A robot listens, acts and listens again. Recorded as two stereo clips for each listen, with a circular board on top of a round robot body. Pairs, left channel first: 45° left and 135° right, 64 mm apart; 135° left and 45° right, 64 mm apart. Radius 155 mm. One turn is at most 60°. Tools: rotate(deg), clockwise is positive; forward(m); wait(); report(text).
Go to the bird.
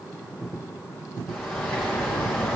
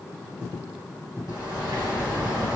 rotate(35)
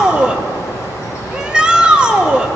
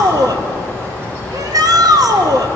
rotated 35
forward(1.0)
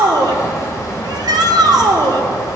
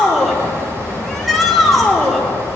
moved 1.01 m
forward(1.0)
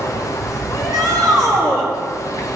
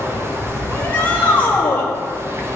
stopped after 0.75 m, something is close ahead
report("Arrived at the bird, straight ahead.")